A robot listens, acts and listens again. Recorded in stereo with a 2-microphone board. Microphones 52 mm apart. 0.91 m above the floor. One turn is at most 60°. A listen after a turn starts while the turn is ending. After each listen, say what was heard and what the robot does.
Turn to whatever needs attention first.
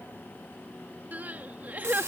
The crying: about 35° right or 145° right. Turn 35° right.
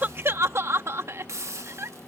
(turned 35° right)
So it is at 105° right. Turn 60° right.
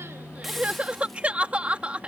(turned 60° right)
The crying is now 25° right. Turn 25° right.
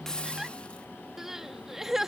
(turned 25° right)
Found it: crying, straight ahead.